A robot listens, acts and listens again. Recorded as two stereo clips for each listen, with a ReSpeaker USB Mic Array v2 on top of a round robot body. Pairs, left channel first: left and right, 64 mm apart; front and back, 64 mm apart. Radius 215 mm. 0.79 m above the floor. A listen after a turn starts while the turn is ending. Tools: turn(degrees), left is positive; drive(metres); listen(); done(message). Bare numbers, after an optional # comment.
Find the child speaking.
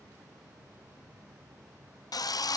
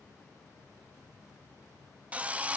listen()
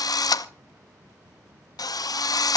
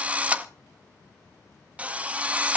listen()
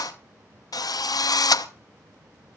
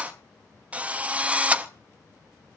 done("I can't make out a child speaking, only a drill.")